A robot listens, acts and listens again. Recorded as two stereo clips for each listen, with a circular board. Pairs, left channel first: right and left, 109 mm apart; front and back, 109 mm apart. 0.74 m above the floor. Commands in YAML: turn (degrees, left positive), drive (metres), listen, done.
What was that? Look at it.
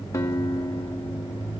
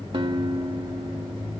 turn: -150
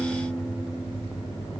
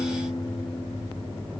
done: "Found it: a guitar, straight ahead."